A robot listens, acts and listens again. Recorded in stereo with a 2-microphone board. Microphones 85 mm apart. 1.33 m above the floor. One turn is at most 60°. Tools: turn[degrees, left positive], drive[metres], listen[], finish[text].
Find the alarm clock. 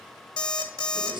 Thought: The alarm clock: about 55° left or 125° left.
Action: turn[55]
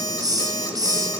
Thought: So it is at 55° left.
Action: turn[55]
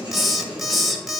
Action: finish[Facing the alarm clock.]